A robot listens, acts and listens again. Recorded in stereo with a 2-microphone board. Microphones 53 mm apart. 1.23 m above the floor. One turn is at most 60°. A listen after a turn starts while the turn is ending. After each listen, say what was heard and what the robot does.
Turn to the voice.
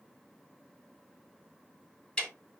Keep listening.
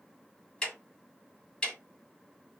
Keep listening.
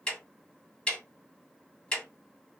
I can't make out anyone speaking to turn to.